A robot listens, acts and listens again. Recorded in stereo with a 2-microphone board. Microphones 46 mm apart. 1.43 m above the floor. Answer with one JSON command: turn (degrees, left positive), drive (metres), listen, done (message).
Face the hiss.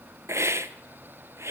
{"turn": -70}
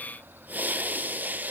{"turn": -40}
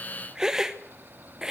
{"turn": -15}
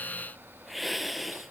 {"done": "Found it: a hiss, straight ahead."}